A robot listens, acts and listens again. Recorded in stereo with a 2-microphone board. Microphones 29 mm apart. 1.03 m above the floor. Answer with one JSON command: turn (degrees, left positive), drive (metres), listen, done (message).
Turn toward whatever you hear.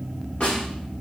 {"turn": 40}
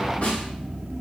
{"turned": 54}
{"turn": 85}
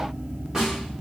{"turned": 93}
{"turn": -10}
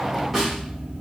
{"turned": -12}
{"done": "Found it: a snare drum, straight ahead, 1 to 2 m away."}